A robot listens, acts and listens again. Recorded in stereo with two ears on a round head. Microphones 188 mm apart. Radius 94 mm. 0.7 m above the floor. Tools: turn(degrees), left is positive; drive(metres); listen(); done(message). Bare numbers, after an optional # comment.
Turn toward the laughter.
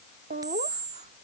# The laughter: about 40° right or 140° right.
turn(-40)
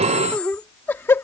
# So it is at 15° left.
turn(15)
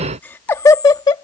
# The laughter is now 20° left.
turn(20)
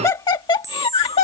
# The laughter is now 30° left.
turn(30)
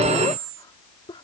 listen()
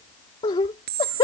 # The laughter is now 25° left.
turn(25)
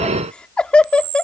done("Facing the laughter.")